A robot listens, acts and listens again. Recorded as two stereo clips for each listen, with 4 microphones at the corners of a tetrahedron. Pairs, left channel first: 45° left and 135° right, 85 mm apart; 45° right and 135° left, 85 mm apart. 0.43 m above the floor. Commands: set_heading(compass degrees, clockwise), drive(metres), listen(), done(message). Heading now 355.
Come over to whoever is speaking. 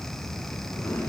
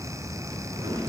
listen()
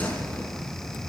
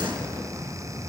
listen()
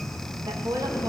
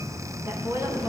set_heading(165)
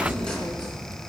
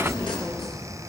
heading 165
listen()
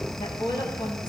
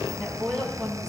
set_heading(125)
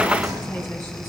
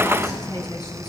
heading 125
listen()
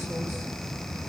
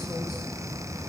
listen()
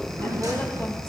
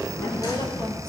done("I heard a woman speaking from this way, but can't make it out now. I did not reach it.")